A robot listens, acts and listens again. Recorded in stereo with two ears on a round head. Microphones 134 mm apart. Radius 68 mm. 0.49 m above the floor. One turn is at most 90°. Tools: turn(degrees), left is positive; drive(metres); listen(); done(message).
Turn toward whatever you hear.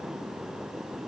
listen()
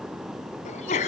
turn(degrees=50)
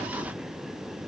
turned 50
listen()
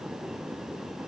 done("I heard a sneeze, but can't make it out now. It was about straight ahead or 80° left.")